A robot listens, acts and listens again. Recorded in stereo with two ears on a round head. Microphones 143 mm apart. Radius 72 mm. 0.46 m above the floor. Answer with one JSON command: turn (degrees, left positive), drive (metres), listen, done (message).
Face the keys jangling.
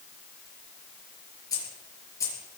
{"turn": 20}
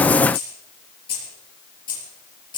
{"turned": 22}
{"turn": 30}
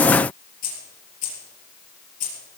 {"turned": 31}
{"turn": 125}
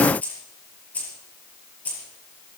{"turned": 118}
{"turn": 10}
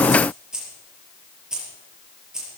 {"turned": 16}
{"done": "Facing the keys jangling."}